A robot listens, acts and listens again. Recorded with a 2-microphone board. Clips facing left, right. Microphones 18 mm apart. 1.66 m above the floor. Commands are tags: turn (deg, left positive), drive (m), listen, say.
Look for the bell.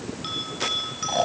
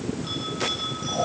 <turn deg="55"/>
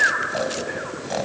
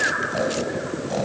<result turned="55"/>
<listen/>
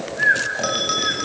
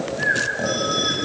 <turn deg="70"/>
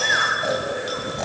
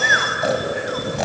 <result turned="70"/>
<listen/>
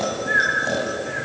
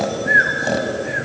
<listen/>
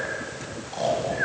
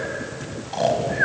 <say>I heard a bell from this way, but can't make it out now.</say>